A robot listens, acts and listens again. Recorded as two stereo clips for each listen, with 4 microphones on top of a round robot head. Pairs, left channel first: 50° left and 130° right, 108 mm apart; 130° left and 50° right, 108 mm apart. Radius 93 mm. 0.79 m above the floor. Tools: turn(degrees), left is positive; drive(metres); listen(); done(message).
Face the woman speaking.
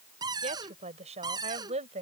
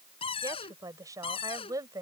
turn(degrees=-110)
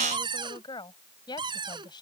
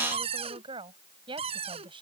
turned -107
done("Found it: a woman speaking, straight ahead.")